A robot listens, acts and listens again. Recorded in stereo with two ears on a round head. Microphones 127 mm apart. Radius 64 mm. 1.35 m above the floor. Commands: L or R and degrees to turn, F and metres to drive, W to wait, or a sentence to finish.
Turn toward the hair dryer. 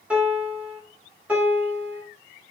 W
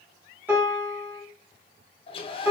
L35
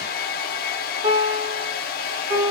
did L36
L105
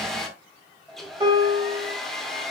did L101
Found it: a hair dryer, straight ahead.